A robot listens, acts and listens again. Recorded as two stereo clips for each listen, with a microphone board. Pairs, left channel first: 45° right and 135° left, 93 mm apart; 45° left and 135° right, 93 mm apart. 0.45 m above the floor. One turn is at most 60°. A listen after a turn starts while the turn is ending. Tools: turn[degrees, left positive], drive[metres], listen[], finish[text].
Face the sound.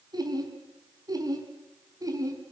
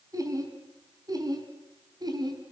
Thought: The laughter: 175° right.
Action: turn[-60]
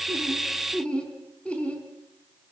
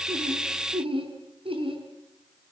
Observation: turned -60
Thought: The laughter is now 120° right.
Action: turn[-60]
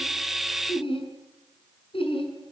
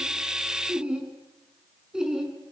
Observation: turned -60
Thought: The laughter is now 50° right.
Action: turn[-50]
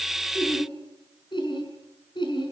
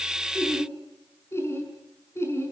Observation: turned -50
Thought: The laughter is now 15° right.
Action: turn[-15]
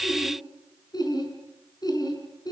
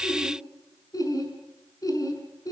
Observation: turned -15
Action: finish[Facing the laughter.]